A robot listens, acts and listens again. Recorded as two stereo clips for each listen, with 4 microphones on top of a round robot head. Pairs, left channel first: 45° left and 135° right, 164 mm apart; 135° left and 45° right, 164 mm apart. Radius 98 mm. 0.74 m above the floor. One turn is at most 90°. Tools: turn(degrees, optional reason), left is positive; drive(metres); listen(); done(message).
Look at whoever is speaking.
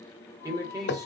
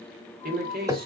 turn(degrees=-65, reason="The man speaking: 65° right.")
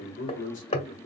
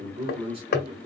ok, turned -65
turn(degrees=10, reason="The man speaking is now 10° left.")
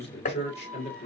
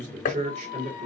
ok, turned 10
done("Facing the man speaking, 1 to 2 m away.")